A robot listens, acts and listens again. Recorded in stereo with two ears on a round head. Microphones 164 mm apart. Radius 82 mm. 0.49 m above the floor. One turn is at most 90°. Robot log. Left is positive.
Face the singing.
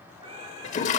note: The singing: about 30° right or 150° right.
cmd yaw -30
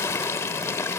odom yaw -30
cmd idle
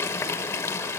cmd idle
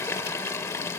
end: I heard singing, but can't make it out now. It was about straight ahead or 120° right.